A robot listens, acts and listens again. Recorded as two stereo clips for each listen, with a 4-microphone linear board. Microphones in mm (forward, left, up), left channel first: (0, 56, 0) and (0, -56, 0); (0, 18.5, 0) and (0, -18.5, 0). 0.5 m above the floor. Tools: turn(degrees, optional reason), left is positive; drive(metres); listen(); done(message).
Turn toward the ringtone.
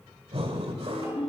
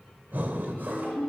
turn(degrees=65, reason="The ringtone: about 65° left or 115° left.")
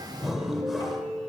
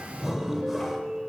done("Found it: a ringtone, straight ahead, over 4 m away.")